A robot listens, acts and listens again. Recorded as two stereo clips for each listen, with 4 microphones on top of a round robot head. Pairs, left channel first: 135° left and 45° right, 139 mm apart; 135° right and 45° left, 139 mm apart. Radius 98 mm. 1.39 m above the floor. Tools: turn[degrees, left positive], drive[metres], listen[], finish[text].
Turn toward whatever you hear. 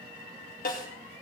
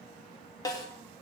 Thought: The snare drum: 160° left.
Action: turn[160]
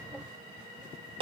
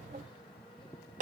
Thought: The snare drum is now 10° left.
Action: turn[10]
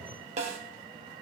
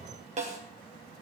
Action: finish[Facing the snare drum.]